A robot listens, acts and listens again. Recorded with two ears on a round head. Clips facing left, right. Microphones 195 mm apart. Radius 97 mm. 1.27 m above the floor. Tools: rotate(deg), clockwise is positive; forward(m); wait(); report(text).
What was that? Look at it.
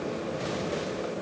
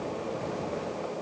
wait()
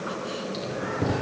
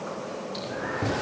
rotate(-40)
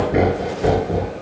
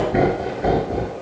rotate(-105)
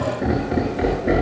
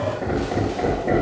rotate(-15)
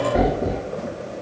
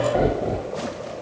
rotate(-10)
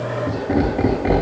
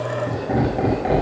report("Facing the laughter, over 4 m away.")